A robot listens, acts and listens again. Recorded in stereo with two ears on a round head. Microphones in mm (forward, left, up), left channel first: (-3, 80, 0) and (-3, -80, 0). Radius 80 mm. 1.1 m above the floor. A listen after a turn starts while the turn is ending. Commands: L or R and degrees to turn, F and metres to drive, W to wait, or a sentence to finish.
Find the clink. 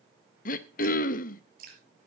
W
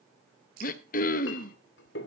L70
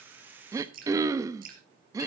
W
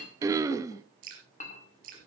L40
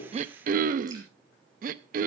W
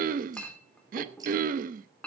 L10
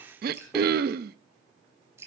Found it: a clink, straight ahead.